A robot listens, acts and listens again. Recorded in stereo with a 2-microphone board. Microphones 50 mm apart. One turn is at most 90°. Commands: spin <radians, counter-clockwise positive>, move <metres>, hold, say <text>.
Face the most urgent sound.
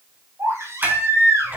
spin -1.22
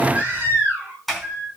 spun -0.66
spin -0.52
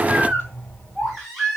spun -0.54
say Found it: a baby crying, straight ahead.